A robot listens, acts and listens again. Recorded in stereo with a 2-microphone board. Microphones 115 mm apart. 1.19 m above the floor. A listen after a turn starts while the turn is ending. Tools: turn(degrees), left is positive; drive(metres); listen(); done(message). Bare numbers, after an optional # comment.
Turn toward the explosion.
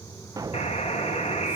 # The explosion: about 35° right or 145° right.
turn(-35)
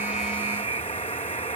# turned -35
listen()
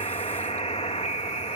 done("I heard an explosion, but can't make it out now. It was about straight ahead or 110° right.")